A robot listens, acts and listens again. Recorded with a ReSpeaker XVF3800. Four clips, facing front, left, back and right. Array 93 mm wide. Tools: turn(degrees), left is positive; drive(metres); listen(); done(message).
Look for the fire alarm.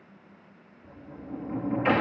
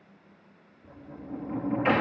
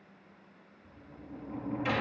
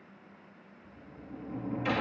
listen()
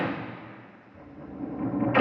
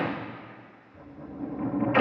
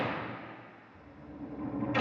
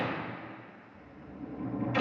listen()
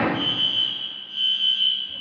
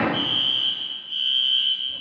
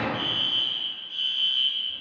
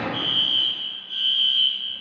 turn(degrees=-90)
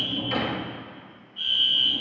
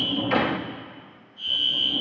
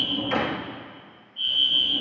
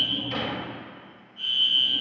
turn(degrees=-30)
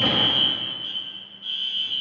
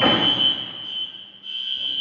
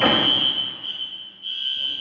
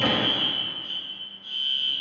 done("Found it: a fire alarm, straight ahead, over 4 m away.")